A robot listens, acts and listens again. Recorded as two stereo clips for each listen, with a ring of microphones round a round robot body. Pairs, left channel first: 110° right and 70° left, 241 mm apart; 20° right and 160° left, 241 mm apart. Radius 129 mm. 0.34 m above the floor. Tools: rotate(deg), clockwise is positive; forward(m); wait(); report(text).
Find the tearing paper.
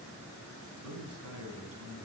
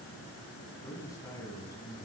wait()
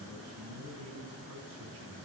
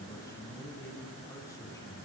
wait()
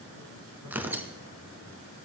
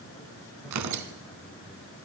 rotate(-150)
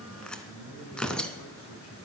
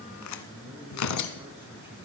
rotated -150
rotate(25)
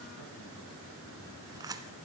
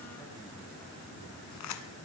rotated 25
rotate(10)
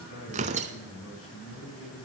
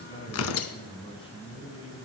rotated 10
report("Facing the tearing paper.")